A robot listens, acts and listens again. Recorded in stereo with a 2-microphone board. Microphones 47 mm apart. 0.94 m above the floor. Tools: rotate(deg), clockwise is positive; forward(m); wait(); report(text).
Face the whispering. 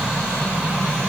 wait()
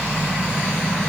wait()
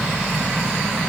report("I can't make out whispering to turn to.")